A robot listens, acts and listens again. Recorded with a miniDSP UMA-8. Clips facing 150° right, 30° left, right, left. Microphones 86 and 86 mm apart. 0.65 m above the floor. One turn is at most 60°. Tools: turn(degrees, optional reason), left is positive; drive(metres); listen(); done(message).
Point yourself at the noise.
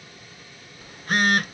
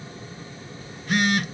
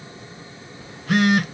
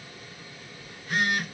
turn(degrees=-60, reason="The phone buzzing: 100° right.")
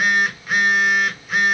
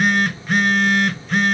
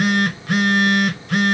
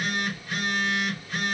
turn(degrees=-60, reason="The phone buzzing is now 65° right.")
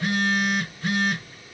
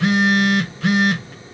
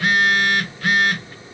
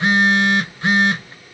turn(degrees=20, reason="The phone buzzing is now 20° left.")
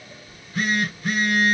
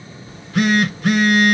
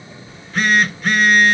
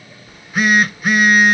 turn(degrees=10, reason="The phone buzzing is now 10° left.")
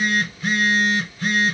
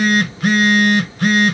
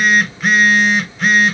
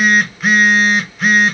done("Facing the phone buzzing.")